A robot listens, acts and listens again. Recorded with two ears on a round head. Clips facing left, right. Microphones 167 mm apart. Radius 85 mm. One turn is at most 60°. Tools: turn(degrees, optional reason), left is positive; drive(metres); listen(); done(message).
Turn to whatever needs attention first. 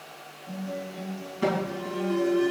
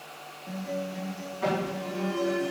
turn(degrees=50, reason="The alarm: about 50° left or 130° left.")
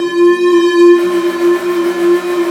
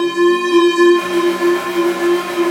done("Facing the alarm, 2 to 4 m away.")